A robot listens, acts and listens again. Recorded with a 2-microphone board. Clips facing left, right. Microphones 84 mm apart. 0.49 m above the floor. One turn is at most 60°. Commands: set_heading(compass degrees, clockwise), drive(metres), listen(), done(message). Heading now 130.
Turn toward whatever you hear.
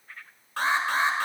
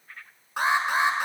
set_heading(145)
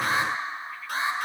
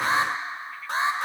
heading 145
set_heading(205)
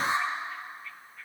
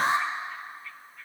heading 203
set_heading(263)
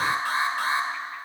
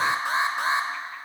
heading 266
set_heading(291)
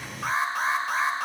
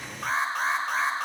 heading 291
done("Facing the alarm, 1 to 2 m away.")